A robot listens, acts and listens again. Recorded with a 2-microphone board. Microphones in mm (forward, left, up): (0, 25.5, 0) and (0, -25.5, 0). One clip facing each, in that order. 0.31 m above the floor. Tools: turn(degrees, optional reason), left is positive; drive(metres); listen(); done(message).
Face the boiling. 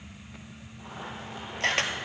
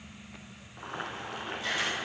turn(degrees=-65, reason="The boiling: about 65° right or 115° right.")
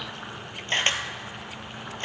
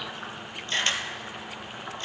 done("Facing the boiling.")